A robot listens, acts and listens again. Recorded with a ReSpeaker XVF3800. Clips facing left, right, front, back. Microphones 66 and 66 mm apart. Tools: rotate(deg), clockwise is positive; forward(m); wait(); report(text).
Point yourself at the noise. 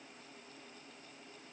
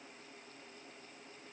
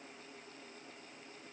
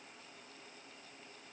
wait()
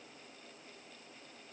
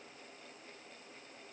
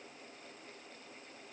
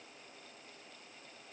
wait()
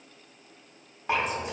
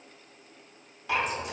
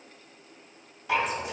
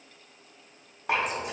rotate(-145)
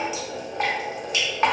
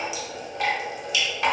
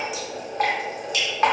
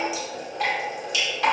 rotate(-35)
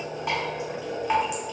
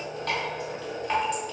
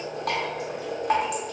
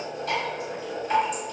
rotate(-10)
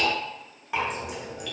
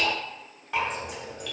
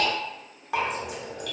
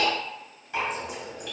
report("Facing the dripping, under 1 m away.")